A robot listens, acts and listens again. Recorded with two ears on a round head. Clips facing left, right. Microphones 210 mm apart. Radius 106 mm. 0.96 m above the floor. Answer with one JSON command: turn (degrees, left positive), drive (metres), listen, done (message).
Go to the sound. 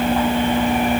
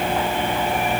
{"listen": true}
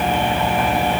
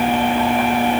{"listen": true}
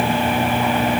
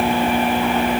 {"done": "I can't make out anything to turn to."}